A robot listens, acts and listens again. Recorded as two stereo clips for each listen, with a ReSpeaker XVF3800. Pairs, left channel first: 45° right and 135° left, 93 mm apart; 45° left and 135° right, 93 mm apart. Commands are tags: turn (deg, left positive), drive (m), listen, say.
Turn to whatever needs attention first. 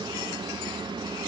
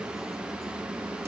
<listen/>
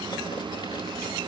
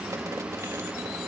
<listen/>
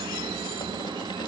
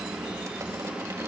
<say>I can't make out anything urgent to turn to.</say>